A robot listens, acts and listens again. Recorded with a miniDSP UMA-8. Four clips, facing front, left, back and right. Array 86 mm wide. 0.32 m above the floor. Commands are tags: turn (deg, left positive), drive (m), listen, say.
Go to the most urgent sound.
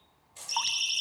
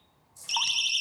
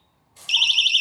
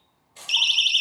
<turn deg="-155"/>
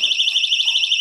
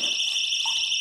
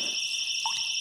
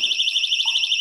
<turn deg="-20"/>
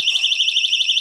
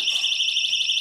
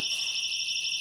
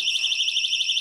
<drive m="1.0"/>
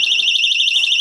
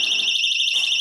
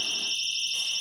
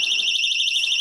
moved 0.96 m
<drive m="1.0"/>
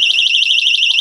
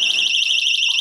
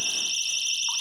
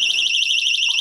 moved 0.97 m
<drive m="1.0"/>
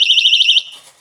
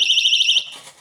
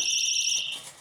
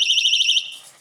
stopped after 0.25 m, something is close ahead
<say>I am next to the siren.</say>